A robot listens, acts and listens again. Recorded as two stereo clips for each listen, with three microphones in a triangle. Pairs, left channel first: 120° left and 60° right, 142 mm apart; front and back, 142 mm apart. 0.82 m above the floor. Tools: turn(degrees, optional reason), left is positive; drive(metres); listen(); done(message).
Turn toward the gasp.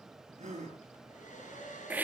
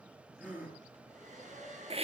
turn(degrees=-100, reason="The gasp: 100° right.")
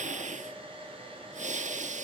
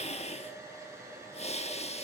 done("Facing where the gasp came from. I can't hear it now.")